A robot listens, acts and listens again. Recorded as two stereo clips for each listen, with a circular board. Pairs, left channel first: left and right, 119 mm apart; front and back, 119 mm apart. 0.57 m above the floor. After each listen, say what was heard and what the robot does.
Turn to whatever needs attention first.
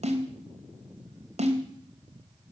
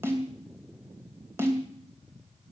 Keep listening.
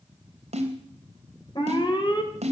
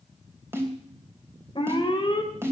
The alarm: 45° left. Turn 45° left.
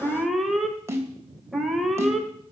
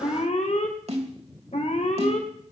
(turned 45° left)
Found it: an alarm, straight ahead.